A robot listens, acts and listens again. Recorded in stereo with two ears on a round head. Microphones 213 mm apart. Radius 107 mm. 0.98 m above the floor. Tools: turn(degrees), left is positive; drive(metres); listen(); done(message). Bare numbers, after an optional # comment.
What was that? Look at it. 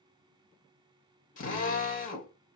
# The drill: about 35° left or 145° left.
turn(35)
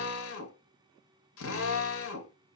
# So it is at 110° left.
turn(110)
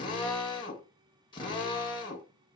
# The drill is now 20° left.
turn(20)
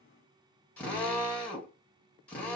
done("Found it: a drill, straight ahead, 1 to 2 m away.")